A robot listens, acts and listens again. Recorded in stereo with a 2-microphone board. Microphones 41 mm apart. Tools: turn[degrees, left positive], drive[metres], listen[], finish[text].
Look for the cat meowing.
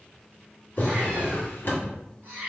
Thought: The cat meowing: about 65° right or 115° right.
Action: turn[-65]
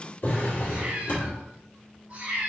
Thought: So it is at 50° right.
Action: turn[-50]
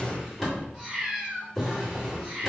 Action: finish[Facing the cat meowing.]